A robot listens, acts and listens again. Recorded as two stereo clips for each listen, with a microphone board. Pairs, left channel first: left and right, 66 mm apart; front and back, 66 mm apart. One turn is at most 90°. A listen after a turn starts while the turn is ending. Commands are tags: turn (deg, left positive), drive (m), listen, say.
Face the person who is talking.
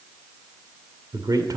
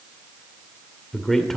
<turn deg="-85"/>
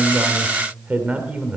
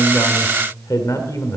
<turn deg="-25"/>
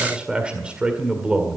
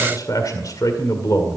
<turn deg="-15"/>
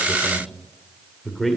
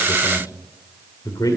<say>Found it: a man speaking, straight ahead, 1 to 2 m away.</say>